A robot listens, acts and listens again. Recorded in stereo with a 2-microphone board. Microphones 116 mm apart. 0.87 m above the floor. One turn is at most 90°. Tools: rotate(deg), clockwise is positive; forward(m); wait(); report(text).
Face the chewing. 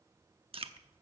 rotate(50)
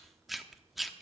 report("Found it: chewing, straight ahead, under 1 m away.")